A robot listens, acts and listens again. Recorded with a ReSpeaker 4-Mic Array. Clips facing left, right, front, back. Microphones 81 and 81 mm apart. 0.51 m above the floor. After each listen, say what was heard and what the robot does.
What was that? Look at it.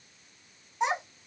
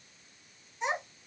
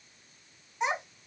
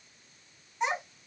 The child speaking: 75° left. Turn 75° left.
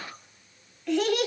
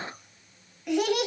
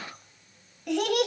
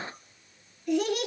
The child speaking is now 20° right. Turn 20° right.
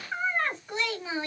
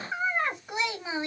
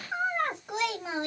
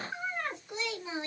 The child speaking is now 20° right. Turn 20° right.
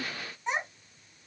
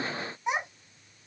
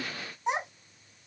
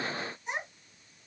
The child speaking is now 15° right. Turn 15° right.
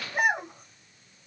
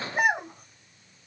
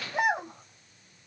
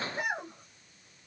Found it: a child speaking, straight ahead.